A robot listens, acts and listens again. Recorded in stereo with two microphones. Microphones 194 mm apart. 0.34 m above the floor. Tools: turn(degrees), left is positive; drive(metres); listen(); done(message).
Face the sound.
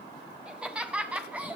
turn(degrees=-30)
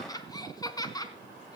turn(degrees=20)
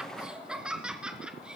done("Facing the laughter, over 4 m away.")